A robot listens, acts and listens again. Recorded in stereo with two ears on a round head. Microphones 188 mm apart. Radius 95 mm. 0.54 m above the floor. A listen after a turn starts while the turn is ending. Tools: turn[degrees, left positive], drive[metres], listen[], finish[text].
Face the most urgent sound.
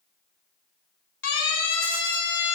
Thought: The siren: about 55° left or 125° left.
Action: turn[55]
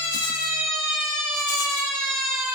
Action: finish[Facing the siren, 2 to 4 m away.]